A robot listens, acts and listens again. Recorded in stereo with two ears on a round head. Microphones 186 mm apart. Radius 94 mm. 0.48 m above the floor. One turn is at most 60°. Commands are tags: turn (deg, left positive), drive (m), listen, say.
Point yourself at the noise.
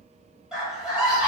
<turn deg="-30"/>
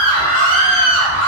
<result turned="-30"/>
<turn deg="25"/>
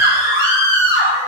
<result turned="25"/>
<turn deg="-20"/>
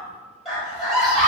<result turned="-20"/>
<say>Found it: a scream, straight ahead.</say>